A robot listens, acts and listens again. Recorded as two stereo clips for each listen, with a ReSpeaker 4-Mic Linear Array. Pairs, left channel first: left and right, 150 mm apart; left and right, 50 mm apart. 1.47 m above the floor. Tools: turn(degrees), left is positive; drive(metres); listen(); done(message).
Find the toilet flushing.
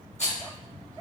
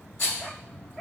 listen()
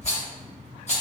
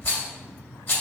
listen()
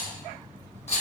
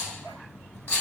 done("I can't make out a toilet flushing, only a rattle.")